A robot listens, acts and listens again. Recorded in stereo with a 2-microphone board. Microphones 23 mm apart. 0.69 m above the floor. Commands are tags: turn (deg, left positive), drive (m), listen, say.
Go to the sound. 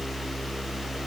<listen/>
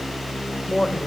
<turn deg="30"/>
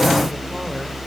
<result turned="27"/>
<listen/>
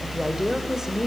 <turn deg="-25"/>
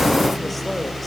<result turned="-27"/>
<listen/>
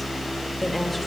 <listen/>
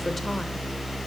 <say>Facing where the woman speaking came from. I can't hear it now. I did not reach it.</say>